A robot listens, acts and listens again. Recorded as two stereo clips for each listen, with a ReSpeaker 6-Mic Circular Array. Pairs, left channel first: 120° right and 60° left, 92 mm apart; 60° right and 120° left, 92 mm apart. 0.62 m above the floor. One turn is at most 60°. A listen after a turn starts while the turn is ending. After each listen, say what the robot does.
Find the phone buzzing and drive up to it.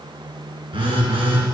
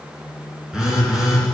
Turn 35° left.
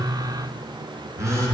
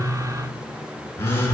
Drive 1.0 m forward.
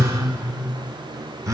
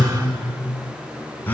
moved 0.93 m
Turn 10° left.
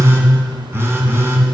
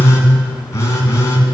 Drive 1.0 m forward.
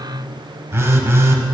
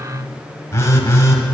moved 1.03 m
Drive 1.0 m forward.
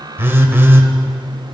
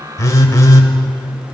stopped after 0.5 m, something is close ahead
I am next to the phone buzzing.